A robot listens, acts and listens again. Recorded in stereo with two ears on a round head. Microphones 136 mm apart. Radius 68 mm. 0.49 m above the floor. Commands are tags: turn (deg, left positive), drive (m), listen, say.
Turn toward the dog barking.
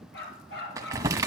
<turn deg="90"/>
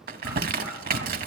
<listen/>
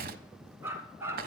<turn deg="-15"/>
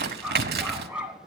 <turn deg="-10"/>
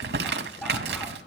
<listen/>
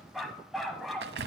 <say>Found it: a dog barking, straight ahead.</say>